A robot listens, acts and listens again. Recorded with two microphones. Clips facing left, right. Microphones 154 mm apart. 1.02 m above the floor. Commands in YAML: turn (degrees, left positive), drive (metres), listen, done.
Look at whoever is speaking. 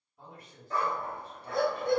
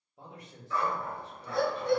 turn: -90
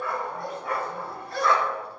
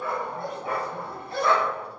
listen: true
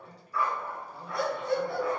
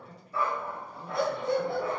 done: "Facing the man speaking."